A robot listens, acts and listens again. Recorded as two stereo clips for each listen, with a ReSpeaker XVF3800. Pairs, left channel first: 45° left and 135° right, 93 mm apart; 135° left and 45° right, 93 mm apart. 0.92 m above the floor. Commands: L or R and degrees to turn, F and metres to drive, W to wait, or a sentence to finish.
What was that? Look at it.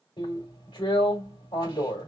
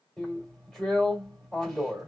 L50
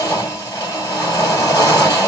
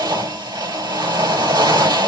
R10
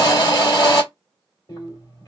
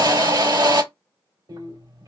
Facing the drill.